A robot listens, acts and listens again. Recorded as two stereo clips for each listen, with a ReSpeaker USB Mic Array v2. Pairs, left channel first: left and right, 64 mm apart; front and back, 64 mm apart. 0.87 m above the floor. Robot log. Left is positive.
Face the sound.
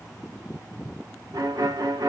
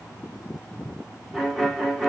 note: The violin: 95° right.
cmd yaw -95
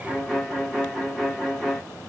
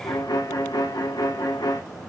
end: Found it: a violin, straight ahead, 1 to 2 m away.